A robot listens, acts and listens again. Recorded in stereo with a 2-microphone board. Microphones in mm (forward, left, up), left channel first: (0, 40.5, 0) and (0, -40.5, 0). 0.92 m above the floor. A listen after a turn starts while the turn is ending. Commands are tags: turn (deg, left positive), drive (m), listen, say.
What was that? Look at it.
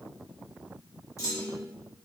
<turn deg="40"/>
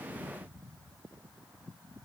<listen/>
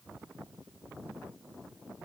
<say>I heard a clunk, but can't make it out now. It was about straight ahead or 100° left.</say>